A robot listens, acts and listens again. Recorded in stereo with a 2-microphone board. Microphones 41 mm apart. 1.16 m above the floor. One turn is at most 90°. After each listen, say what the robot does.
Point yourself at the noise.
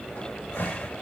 Turn 65° left.
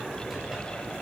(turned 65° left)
Keep listening.
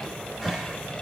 Found it: a cupboard door, straight ahead, over 4 m away.